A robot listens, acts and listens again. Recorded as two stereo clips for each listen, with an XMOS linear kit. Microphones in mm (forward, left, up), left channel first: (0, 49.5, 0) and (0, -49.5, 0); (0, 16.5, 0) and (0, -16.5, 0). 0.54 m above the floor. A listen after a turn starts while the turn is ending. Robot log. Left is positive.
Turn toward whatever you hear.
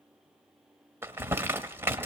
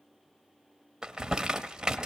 note: The crumpling: about 25° right or 155° right.
cmd yaw -25
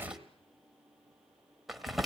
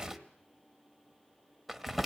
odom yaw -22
end: Facing the crumpling, 1 to 2 m away.